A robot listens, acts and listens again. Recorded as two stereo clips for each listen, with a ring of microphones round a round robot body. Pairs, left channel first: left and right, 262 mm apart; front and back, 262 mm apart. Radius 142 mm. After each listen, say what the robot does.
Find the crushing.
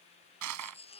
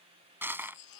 Turn 100° right.
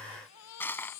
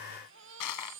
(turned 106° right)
Turn 10° left.
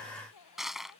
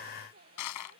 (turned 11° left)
Found it: crushing, straight ahead.